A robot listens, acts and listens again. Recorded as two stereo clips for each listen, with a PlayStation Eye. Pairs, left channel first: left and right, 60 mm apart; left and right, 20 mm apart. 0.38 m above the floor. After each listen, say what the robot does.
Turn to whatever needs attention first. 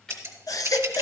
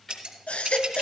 Turn 90° left.
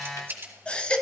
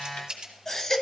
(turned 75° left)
Turn 20° left.
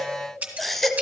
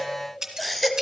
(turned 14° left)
Found it: a baby crying, straight ahead.